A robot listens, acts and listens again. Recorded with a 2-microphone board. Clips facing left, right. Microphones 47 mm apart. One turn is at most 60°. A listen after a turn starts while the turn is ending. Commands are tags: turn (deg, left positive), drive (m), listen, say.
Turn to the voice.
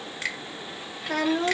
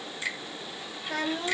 <turn deg="60"/>
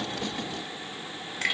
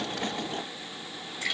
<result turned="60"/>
<listen/>
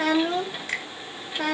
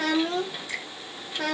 <turn deg="15"/>
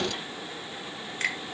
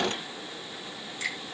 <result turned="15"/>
<listen/>
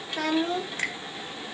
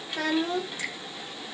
<say>Found it: a child speaking, straight ahead.</say>